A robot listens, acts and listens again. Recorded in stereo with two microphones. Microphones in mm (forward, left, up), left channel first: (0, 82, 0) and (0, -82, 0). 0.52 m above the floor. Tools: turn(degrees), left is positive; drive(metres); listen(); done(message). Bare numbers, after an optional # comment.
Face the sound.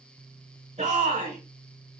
# The shout: about 45° right or 135° right.
turn(-45)
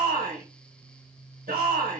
# So it is at 85° right.
turn(-85)
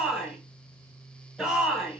done("Facing the shout.")